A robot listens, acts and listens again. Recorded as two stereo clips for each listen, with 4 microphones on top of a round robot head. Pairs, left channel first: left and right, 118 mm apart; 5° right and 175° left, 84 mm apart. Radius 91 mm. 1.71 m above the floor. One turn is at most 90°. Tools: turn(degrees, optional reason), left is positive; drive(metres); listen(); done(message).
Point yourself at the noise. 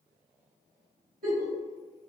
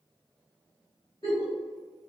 turn(degrees=-70, reason="The giggle: 70° right.")
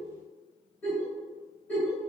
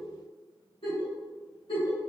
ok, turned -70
turn(degrees=10, reason="The giggle is now 10° left.")
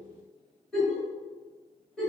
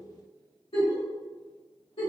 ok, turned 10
done("Facing the giggle.")